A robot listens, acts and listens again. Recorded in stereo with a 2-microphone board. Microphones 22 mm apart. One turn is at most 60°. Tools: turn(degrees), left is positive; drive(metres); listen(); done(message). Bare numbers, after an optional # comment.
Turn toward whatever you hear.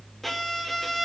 turn(30)
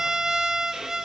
# So it is at 20° right.
turn(-20)
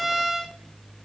done("Facing the violin, 1 to 2 m away.")